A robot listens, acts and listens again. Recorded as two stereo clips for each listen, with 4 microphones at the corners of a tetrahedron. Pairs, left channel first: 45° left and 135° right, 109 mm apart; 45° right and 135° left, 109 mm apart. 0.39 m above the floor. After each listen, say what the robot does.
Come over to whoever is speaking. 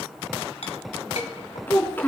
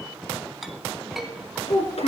Turn 25° right.
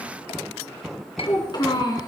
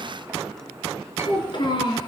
Drive 1.0 m forward.
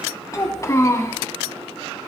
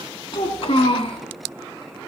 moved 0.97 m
Turn 15° right.
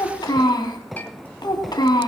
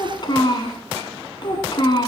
Drive 1.0 m forward.
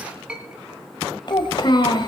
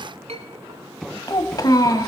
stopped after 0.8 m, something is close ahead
I am next to the child speaking.